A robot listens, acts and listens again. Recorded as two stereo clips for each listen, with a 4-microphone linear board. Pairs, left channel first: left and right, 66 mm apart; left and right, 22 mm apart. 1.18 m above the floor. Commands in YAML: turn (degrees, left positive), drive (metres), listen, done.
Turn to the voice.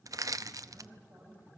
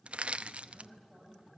turn: -35
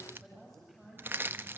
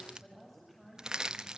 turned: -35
done: "Found it: a woman speaking, straight ahead, over 4 m away."